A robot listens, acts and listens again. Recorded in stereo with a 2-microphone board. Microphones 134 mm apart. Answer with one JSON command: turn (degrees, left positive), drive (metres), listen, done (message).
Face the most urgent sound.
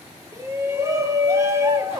{"turn": -20}
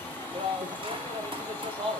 {"turn": -140}
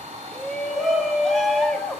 {"done": "Facing the shout."}